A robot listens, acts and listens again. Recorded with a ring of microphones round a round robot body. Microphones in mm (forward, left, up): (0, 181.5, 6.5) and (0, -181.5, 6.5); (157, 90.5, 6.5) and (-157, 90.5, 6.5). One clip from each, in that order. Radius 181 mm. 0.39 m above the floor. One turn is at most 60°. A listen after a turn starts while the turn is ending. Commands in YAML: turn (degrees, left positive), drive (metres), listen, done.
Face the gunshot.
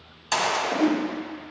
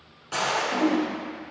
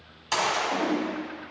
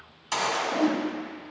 turn: 60
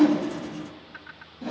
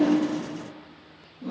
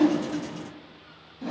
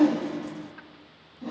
turn: 20
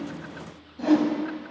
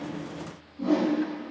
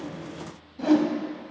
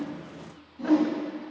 done: "I heard a gunshot from this way, but can't make it out now."